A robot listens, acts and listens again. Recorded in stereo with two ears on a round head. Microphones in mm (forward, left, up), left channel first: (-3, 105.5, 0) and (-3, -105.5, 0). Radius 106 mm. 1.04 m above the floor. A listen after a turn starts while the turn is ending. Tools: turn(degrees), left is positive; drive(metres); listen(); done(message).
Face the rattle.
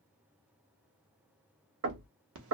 listen()
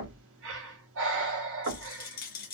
turn(degrees=40)
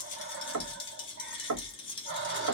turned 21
turn(degrees=25)
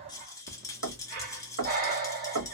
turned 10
turn(degrees=15)
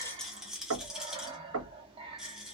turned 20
done("Facing the rattle.")